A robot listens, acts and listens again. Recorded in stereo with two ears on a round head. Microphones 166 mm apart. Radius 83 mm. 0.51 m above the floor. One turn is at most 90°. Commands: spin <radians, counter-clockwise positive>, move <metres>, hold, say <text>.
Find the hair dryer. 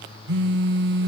hold
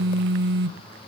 hold
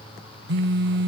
say I can't make out a hair dryer, only a phone buzzing.